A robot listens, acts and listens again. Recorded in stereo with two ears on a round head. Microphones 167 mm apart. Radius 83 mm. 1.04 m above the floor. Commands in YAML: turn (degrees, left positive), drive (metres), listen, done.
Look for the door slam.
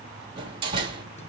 turn: -25
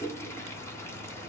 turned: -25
listen: true
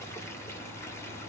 done: "I heard a door slam, but can't make it out now. It was about straight ahead or 130° right."